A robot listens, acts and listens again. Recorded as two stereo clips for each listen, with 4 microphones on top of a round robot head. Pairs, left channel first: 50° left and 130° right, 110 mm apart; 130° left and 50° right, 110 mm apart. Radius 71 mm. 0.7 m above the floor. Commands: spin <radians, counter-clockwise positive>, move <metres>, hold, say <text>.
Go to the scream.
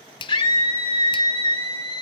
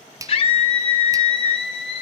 spin 1.57
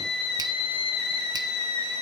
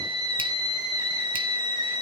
move 1.0
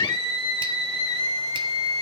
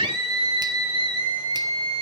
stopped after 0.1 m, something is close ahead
say Something is in my way. I am facing the scream but have not reached it.